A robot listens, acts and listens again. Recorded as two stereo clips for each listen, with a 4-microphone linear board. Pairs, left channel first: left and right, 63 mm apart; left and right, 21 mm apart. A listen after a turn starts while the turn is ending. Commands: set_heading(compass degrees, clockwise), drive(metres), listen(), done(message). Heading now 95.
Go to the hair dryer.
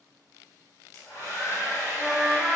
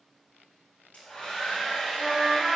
set_heading(30)
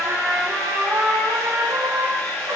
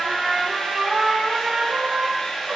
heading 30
set_heading(345)
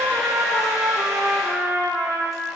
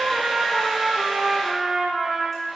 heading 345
listen()
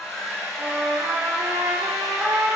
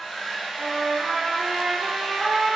drive(1.0)
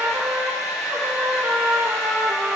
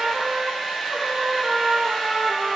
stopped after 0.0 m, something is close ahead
done("Blocked. The hair dryer is further on, straight ahead.")